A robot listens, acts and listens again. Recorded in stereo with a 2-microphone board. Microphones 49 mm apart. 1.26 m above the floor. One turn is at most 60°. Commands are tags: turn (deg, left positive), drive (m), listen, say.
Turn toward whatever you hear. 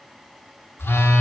<turn deg="50"/>
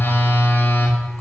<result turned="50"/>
<turn deg="60"/>
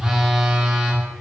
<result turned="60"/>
<turn deg="-10"/>
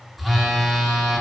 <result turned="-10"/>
<say>Found it: a phone buzzing, straight ahead, 1 to 2 m away.</say>